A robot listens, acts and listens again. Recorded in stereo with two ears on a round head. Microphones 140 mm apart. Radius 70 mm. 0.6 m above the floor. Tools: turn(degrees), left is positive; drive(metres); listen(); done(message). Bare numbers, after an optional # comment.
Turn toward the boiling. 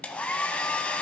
listen()
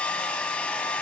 listen()
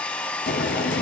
turn(90)
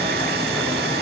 listen()
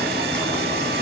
# The boiling is now 10° left.
turn(10)
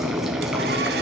done("Facing the boiling.")